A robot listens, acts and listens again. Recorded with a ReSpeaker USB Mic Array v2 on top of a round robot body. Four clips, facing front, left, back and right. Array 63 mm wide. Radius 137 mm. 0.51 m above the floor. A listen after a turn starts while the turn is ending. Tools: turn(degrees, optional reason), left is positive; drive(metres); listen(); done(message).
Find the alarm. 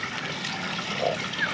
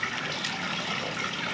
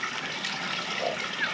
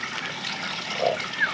listen()
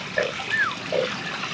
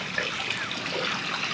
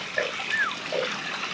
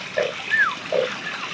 listen()
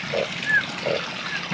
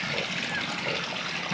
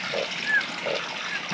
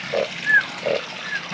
done("I can't make out an alarm to turn to.")